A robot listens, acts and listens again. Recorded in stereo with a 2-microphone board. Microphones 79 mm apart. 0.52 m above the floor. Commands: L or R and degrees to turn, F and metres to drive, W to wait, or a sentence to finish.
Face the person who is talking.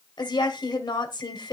L70
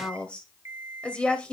L15
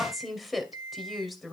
Found it: a woman speaking, straight ahead, 2 to 4 m away.